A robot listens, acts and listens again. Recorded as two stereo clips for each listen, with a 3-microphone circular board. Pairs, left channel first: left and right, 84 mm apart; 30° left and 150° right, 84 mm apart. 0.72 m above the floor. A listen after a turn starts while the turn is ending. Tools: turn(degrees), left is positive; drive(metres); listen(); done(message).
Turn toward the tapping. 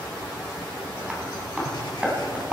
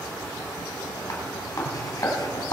turn(degrees=-20)
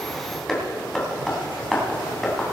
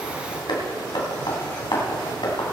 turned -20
done("Found it: tapping, straight ahead.")